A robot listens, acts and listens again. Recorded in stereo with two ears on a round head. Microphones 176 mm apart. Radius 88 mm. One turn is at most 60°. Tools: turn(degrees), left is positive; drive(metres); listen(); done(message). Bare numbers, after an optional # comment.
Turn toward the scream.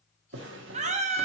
# The scream: about 35° right or 145° right.
turn(-35)
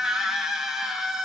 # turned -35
done("Found it: a scream, straight ahead.")